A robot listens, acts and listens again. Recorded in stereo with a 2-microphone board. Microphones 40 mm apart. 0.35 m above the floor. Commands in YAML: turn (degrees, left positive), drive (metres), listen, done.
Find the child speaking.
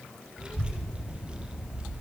turn: -25
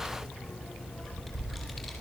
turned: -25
done: "Found it: a child speaking, straight ahead."